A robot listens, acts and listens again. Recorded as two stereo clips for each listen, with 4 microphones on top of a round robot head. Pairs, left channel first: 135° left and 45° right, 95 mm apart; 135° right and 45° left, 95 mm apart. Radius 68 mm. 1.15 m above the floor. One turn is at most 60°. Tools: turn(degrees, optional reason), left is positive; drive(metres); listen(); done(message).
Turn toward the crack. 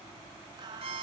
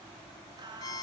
listen()
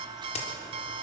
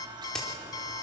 turn(degrees=60, reason="The crack: 145° left.")
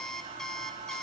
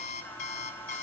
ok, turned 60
turn(degrees=60, reason="Nothing new. It was at 85° left.")
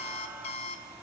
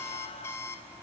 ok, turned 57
turn(degrees=25, reason="Nothing new. It was at 25° left.")
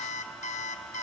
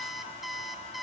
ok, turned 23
done("I heard a crack from this way, but can't make it out now.")